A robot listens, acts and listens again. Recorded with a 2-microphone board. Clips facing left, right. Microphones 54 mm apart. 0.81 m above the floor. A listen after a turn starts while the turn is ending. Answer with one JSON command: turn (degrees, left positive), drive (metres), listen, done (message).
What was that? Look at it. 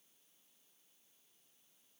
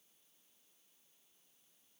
{"listen": true}
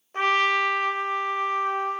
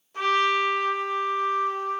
{"turn": 45}
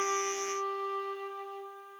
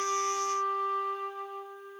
{"done": "Facing the trumpet, 1 to 2 m away."}